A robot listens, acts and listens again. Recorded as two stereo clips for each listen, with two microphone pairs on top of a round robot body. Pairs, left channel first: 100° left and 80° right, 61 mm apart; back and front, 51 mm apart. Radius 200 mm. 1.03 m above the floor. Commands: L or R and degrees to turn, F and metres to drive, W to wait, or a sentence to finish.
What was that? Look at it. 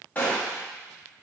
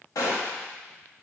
L165
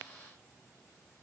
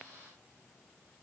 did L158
L10
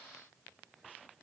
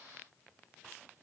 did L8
I heard a gunshot from this way, but can't make it out now.